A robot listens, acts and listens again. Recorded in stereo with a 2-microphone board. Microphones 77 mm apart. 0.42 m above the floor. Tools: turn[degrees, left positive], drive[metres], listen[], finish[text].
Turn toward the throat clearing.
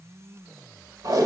Action: listen[]
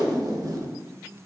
Action: listen[]
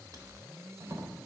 Action: finish[I can't make out throat clearing to turn to.]